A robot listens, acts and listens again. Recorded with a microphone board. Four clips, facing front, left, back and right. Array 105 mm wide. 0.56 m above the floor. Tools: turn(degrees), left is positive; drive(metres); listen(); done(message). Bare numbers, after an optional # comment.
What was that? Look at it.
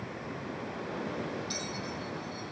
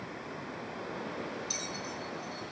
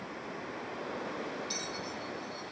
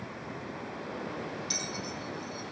# The bell: 90° right.
turn(-90)
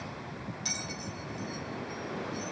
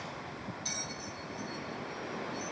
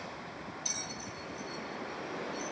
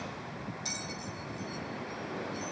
# The bell is now 15° right.
turn(-15)
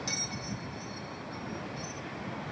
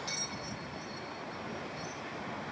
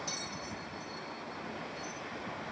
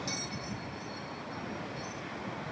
done("Found it: a bell, straight ahead, 1 to 2 m away.")